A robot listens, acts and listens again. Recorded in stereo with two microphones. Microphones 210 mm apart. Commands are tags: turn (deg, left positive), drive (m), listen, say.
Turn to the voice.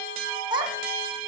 <turn deg="-20"/>
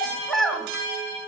<say>Facing the child speaking, 2 to 4 m away.</say>